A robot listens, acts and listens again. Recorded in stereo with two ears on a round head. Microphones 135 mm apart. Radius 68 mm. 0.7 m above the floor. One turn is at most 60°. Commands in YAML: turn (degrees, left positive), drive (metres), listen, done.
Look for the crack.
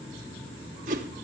listen: true
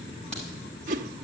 turn: 30
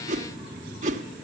listen: true
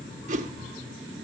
done: "I heard a crack, but can't make it out now. It was about 20° right or 140° left."